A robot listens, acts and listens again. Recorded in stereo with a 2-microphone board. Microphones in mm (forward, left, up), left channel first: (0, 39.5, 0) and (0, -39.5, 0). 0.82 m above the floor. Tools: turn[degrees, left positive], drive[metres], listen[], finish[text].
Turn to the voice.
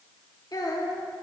Thought: The child speaking: about 50° left or 130° left.
Action: turn[50]
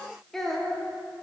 Action: finish[Found it: a child speaking, straight ahead.]